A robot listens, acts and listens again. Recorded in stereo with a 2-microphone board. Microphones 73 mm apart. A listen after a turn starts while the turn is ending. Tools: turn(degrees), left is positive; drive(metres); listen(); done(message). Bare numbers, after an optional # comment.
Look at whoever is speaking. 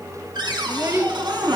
# The child speaking: about 35° right or 145° right.
turn(-35)
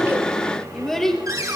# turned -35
done("Found it: a child speaking, straight ahead.")